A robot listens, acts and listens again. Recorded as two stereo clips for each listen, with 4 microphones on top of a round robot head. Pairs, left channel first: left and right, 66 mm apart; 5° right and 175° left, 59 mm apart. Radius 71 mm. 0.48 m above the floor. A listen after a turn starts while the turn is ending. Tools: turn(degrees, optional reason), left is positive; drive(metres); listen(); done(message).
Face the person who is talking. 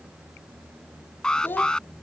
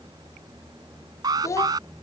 turn(degrees=30, reason="The child speaking: 30° left.")
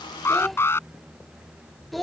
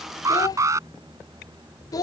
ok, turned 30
done("Found it: a child speaking, straight ahead.")